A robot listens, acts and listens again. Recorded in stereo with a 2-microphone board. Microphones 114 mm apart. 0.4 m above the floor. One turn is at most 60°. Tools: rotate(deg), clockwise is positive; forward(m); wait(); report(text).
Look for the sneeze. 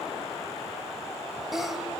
rotate(-30)
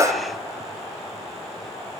rotate(35)
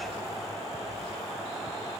report("Facing where the sneeze came from. I can't hear it now.")